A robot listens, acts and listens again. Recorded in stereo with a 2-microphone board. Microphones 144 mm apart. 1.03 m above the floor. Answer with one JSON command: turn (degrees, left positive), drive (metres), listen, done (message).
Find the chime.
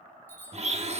{"turn": 30}
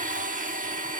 {"listen": true}
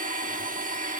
{"listen": true}
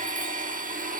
{"done": "I heard a chime, but can't make it out now. It was about 15° right or 135° left."}